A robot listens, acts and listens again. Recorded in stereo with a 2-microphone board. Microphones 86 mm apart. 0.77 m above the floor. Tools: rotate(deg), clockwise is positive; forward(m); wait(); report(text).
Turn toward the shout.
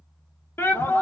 rotate(-30)
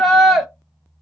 report("Found it: a shout, straight ahead, under 1 m away.")